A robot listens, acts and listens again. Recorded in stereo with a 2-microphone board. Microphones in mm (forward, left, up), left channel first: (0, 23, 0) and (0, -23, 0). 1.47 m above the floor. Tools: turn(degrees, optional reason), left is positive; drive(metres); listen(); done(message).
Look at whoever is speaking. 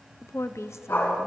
turn(degrees=75, reason="The woman speaking: about 75° left or 105° left.")
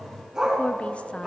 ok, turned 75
listen()
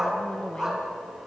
listen()
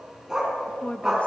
turn(degrees=25, reason="So it is at 25° left.")
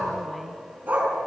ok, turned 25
listen()
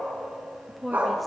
done("Facing the woman speaking.")